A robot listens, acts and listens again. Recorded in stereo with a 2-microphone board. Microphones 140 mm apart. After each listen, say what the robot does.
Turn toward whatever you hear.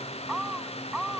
Keep listening.
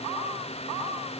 Keep listening.
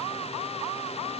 I can't make out anything to turn to.